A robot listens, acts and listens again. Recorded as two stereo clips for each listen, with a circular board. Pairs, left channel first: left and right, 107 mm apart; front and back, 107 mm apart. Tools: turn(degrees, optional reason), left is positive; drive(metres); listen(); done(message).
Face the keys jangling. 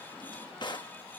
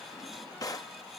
listen()
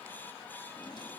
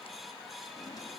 listen()
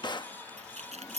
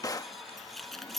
turn(degrees=-85, reason="The keys jangling: 85° right.")
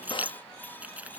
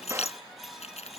turn(degrees=-15, reason="The keys jangling is now 15° right.")
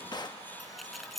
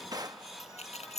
done("Found it: keys jangling, straight ahead.")